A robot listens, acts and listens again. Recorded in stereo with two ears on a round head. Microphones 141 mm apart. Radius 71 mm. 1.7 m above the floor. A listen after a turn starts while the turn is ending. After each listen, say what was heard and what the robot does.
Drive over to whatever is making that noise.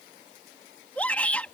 Turn 30° left.
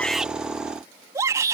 So it is at 20° right. Turn 20° right.
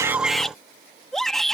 Drive 1.0 m forward.
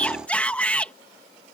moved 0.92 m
The shout is now 10° left. Turn 10° left.
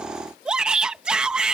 Drive 1.0 m forward.
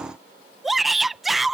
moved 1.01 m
Drive 1.0 m forward.
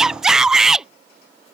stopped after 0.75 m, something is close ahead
I am next to the shout.